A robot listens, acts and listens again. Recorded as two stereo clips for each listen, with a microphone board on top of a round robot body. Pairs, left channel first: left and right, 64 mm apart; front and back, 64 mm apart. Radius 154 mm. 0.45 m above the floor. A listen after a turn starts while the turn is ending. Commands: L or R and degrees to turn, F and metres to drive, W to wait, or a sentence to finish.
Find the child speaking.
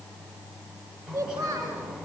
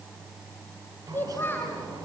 R60
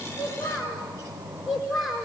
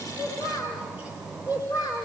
Facing the child speaking.